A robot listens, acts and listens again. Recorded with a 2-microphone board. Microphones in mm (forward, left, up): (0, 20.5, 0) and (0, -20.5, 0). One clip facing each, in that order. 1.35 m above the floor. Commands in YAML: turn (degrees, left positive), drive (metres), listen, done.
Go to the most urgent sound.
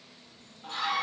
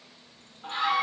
turn: -30
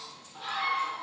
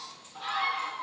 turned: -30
drive: 1.0
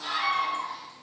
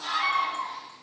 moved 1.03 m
drive: 1.0
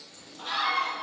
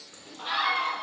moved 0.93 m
turn: -15
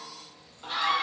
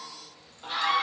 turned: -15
drive: 1.0
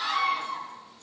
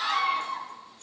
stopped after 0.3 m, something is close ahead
turn: -10
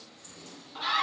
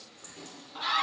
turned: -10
done: "Arrived at the scream, straight ahead."